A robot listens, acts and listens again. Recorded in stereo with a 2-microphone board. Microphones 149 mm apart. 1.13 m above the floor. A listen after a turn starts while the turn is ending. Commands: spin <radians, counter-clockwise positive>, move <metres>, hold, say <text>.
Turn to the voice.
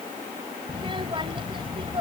spin -0.61
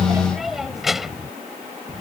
say Found it: a child speaking, straight ahead.